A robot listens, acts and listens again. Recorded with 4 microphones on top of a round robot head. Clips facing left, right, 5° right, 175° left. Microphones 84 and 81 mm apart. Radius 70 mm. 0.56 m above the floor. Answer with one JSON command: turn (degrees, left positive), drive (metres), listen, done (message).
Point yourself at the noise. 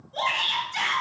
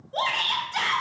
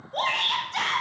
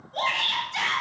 {"turn": -55}
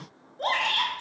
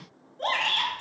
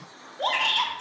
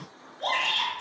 {"turn": 10}
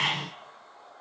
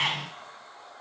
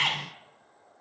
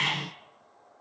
{"done": "Found it: a shout, straight ahead."}